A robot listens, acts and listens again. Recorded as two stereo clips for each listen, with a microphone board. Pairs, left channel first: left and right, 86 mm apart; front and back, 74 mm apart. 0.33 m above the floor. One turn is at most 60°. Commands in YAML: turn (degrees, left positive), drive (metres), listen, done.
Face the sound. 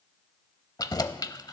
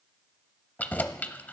turn: 60
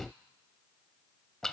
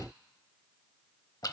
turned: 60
done: "Facing the keys jangling, under 1 m away."